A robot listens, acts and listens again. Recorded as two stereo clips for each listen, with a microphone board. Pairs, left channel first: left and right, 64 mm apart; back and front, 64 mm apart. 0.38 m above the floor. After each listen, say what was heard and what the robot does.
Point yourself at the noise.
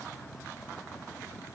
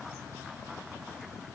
Keep listening.
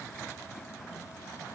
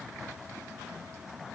Keep listening.
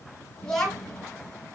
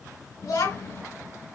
The child speaking: 170° left. Turn 170° left.
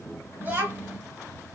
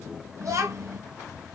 The child speaking is now 30° right. Turn 30° right.
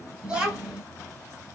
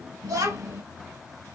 The child speaking is now 15° right. Turn 15° right.
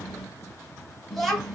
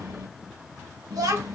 Facing the child speaking.